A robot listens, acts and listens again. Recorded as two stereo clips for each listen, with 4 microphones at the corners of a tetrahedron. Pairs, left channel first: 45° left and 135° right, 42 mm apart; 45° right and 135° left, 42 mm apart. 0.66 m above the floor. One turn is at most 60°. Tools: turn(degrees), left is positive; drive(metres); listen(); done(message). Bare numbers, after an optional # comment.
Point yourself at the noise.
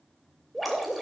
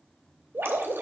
# The dripping: 135° left.
turn(60)
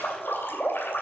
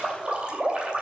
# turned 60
# The dripping is now 70° left.
turn(60)
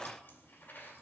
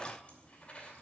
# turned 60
# Nothing new. It was at 10° left.
turn(10)
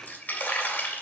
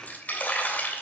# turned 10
done("Facing the dripping, 2 to 4 m away.")